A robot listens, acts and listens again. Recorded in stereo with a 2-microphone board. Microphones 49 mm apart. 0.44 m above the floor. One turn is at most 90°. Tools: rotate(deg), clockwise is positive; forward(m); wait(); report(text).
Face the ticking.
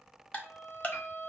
rotate(-30)
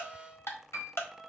rotate(-90)
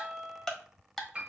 report("Facing the ticking.")